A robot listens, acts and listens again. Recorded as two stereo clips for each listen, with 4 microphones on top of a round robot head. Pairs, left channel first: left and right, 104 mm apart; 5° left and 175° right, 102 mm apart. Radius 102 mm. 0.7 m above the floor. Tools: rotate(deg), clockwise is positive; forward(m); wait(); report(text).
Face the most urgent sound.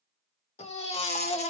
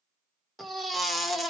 rotate(-95)
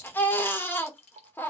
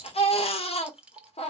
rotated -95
rotate(-20)
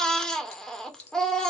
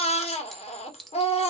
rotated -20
report("Found it: a baby crying, straight ahead, 1 to 2 m away.")